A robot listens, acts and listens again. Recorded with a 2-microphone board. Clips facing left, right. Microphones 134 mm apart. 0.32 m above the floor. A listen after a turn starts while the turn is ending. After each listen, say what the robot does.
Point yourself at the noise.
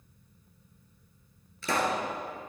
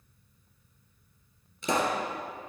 Turn 20° right.
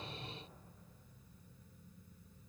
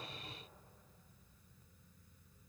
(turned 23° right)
Keep listening.
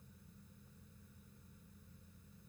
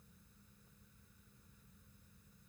I heard a pop, but can't make it out now. It was about 5° left or 140° right.